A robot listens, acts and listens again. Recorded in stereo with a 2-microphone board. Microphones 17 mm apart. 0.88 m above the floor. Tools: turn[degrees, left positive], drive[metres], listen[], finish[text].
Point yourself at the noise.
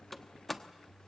Action: turn[30]
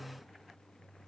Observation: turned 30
Action: listen[]
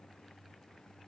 Action: finish[I heard a door slam, but can't make it out now. It was about 20° right or 140° left.]